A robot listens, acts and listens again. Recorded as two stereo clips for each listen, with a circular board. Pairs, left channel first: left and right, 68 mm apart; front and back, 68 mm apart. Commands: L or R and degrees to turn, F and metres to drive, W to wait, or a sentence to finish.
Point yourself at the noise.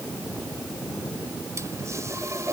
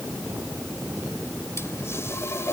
R50
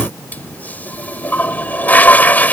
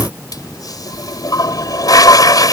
L25
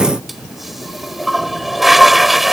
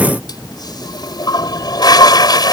Facing the toilet flushing.